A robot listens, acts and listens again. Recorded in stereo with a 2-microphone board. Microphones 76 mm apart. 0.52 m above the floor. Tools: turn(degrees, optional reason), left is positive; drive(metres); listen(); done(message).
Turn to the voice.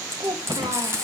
turn(degrees=-90)
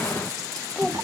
done("Facing the child speaking, 1 to 2 m away.")